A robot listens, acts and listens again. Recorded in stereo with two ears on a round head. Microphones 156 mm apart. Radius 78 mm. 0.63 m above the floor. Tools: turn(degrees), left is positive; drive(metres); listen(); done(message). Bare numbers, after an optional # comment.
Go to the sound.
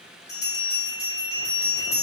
# The bell: about 20° left or 160° left.
turn(20)
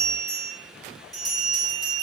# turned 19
drive(1.0)
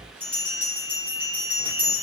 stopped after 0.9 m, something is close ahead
# The bell is now 10° left.
turn(10)
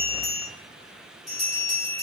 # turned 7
done("Arrived at the bell, straight ahead.")